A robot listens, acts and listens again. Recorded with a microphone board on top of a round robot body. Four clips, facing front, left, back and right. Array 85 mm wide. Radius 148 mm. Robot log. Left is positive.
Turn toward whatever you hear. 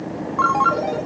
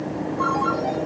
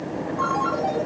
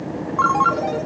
note: The ringtone: 45° right.
cmd yaw -45
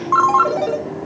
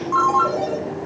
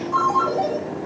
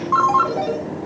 note: The ringtone is now 10° right.
cmd yaw -10
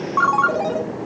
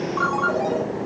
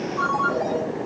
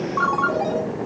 end: Found it: a ringtone, straight ahead.